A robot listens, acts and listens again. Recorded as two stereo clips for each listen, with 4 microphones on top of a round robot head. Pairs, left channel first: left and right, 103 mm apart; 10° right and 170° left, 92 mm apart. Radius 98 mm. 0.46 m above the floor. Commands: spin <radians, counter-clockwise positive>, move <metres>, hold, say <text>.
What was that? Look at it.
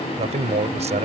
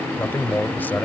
spin -1.48
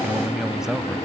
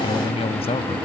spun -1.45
say Facing the man speaking.